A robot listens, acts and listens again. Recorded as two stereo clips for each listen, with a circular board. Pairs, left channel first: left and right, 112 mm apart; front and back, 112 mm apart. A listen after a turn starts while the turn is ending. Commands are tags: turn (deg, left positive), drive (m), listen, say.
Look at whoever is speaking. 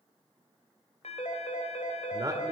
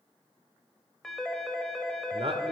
<turn deg="-145"/>
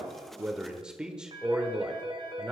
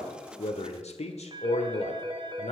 <turn deg="-10"/>
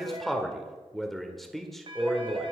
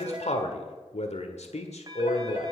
<say>Facing the man speaking, 1 to 2 m away.</say>